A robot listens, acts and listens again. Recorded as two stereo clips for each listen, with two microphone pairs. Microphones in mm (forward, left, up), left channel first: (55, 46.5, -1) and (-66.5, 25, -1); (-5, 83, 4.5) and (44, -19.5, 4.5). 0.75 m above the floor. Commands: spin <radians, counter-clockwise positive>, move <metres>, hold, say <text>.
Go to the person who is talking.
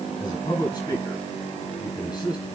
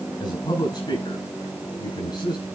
spin 1.22
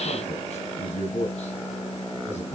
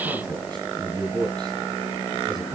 spin -0.17
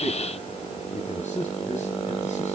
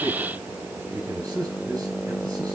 move 1.0
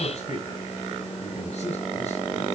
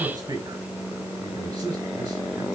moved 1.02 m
move 1.0
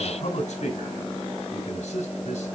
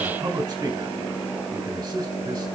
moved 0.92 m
move 1.0
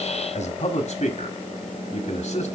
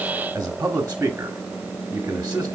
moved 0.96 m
spin 0.17
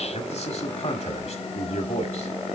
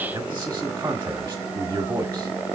move 1.0
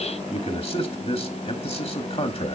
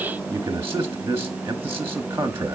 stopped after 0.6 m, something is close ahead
say Arrived at the man speaking, straight ahead.